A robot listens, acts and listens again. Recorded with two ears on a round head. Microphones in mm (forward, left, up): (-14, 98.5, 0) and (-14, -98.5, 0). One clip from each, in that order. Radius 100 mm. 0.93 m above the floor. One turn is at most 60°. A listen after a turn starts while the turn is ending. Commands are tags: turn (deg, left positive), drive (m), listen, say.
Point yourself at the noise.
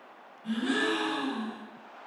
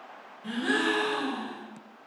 <turn deg="-60"/>
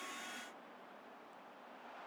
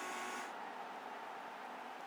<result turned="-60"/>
<turn deg="-30"/>
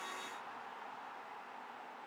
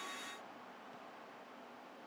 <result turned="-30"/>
<say>I heard a gasp from this way, but can't make it out now.</say>